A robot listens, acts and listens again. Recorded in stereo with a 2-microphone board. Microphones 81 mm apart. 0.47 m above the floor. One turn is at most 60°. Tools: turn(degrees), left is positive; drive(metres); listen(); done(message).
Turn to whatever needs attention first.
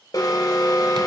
turn(degrees=45)
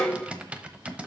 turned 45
turn(degrees=10)
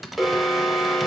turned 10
done("Facing the alarm.")